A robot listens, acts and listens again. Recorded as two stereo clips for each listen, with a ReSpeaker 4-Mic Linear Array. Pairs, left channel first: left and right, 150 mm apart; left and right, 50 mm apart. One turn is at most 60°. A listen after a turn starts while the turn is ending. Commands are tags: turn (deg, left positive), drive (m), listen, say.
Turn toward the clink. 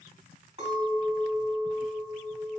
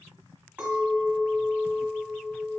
<turn deg="-35"/>
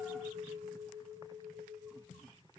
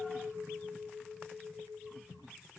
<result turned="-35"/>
<say>Facing the clink.</say>